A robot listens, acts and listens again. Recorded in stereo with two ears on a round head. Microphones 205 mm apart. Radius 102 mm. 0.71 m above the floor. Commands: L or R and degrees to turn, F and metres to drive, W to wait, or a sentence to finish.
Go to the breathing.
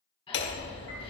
L25
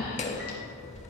L135
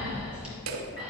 F1.0
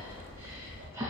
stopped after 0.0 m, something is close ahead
R10
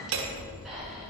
W
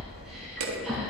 Blocked. The breathing is further on, straight ahead.